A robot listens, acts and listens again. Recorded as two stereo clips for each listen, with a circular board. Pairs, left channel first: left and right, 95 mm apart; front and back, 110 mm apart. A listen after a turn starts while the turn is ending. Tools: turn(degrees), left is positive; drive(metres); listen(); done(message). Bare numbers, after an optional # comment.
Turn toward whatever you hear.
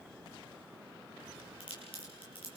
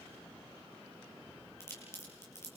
# The crack: 65° left.
turn(65)
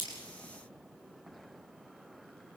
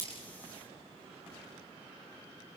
done("Facing where the crack came from. I can't hear it now.")